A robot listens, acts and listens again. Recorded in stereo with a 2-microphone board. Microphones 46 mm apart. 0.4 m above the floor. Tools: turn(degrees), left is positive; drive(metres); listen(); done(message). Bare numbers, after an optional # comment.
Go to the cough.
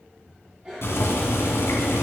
# The cough: about 20° right or 160° right.
turn(-20)
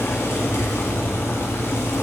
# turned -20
listen()
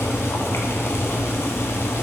listen()
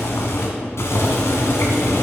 done("I heard a cough, but can't make it out now. It was about straight ahead or 140° right. I did not reach it.")